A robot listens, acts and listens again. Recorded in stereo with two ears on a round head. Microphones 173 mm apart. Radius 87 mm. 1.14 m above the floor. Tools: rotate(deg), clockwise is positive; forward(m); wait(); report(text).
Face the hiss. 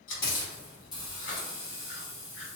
rotate(-20)
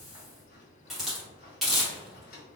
report("Facing the hiss, 1 to 2 m away.")